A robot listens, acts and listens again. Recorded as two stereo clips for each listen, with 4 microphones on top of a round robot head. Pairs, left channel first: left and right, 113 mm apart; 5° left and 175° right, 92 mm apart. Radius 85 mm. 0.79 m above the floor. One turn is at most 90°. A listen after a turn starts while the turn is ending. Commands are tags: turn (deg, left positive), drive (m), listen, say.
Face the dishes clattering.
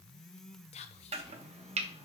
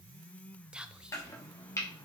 <listen/>
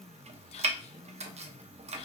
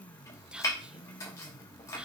<listen/>
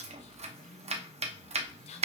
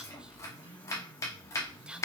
<say>I can't make out dishes clattering to turn to.</say>